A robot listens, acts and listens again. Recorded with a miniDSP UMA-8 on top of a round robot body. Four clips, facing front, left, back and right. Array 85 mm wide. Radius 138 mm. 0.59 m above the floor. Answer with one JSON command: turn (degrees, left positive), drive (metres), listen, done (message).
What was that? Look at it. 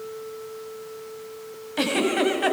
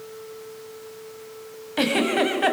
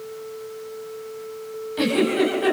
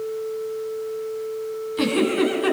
{"turn": 70}
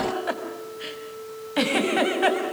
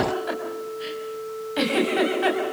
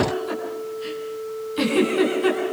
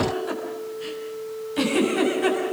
{"turn": 20}
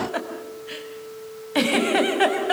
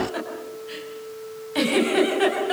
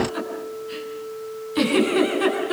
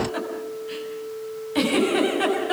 {"done": "Found it: a giggle, straight ahead."}